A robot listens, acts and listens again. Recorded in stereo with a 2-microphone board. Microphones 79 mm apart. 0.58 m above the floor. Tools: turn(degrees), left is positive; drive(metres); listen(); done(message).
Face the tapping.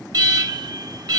listen()
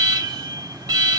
listen()
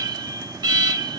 done("I can't make out tapping to turn to.")